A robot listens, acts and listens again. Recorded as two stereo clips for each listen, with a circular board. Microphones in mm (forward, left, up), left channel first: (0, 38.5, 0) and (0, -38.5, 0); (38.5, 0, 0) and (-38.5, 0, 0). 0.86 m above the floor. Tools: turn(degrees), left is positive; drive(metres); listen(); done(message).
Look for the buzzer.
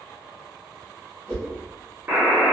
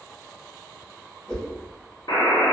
turn(degrees=-30)
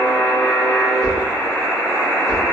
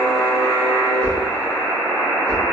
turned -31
done("Found it: a buzzer, straight ahead, under 1 m away.")